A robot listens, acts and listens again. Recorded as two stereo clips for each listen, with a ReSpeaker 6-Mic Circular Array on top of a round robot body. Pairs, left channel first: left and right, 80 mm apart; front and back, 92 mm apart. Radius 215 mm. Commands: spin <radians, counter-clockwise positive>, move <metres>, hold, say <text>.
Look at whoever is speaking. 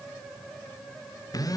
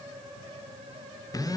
hold
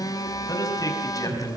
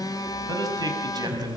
spin 2.36
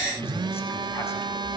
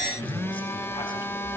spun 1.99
spin 0.44
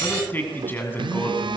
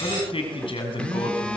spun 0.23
spin 0.44
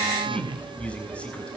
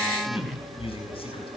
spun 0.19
spin 0.26
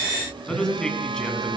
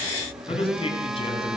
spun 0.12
spin 0.17
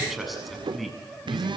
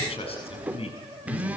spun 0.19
say Found it: a man speaking, straight ahead.